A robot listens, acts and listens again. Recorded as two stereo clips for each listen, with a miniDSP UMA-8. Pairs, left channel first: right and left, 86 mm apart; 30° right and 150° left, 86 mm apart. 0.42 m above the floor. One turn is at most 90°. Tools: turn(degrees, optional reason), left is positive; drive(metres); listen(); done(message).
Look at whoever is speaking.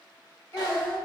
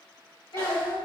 turn(degrees=-40, reason="The child speaking: 40° right.")
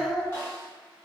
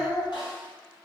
turn(degrees=15, reason="The child speaking is now 15° left.")
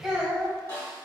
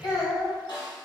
done("Facing the child speaking.")